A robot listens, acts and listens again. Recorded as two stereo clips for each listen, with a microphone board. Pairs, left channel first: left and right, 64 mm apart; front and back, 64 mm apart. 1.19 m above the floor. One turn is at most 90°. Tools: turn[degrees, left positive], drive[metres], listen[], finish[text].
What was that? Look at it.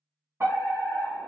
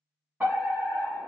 Thought: The fire alarm: 125° right.
Action: turn[-90]
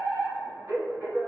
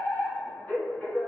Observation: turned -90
Thought: The fire alarm is now 55° right.
Action: turn[-55]
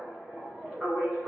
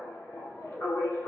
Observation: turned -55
Action: finish[Facing the fire alarm, 1 to 2 m away.]